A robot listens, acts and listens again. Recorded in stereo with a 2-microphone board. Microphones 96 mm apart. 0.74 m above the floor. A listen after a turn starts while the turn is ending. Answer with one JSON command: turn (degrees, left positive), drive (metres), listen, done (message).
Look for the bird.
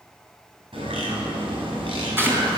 {"turn": -70}
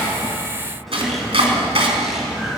{"done": "Facing the bird, 2 to 4 m away."}